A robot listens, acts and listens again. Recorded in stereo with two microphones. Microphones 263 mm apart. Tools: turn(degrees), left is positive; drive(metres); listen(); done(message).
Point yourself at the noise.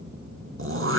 turn(degrees=-55)
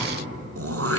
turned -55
turn(degrees=-65)
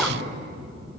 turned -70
listen()
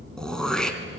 done("Facing the throat clearing.")